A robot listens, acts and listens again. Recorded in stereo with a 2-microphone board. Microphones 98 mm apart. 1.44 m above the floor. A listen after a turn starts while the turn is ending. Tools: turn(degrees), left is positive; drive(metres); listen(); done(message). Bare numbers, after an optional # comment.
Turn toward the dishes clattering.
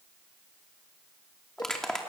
listen()
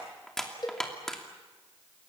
listen()
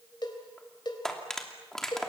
turn(-90)
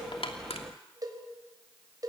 listen()
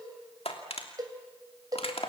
listen()
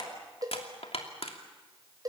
done("Facing where the dishes clattering came from. I can't hear it now.")